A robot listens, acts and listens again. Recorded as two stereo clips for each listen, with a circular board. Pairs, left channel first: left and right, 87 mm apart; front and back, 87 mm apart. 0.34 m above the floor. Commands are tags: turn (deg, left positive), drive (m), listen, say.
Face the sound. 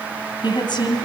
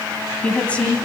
<turn deg="75"/>
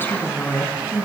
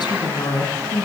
<turn deg="25"/>
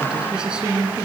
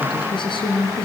<turn deg="-10"/>
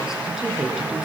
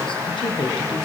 <say>Found it: a woman speaking, straight ahead.</say>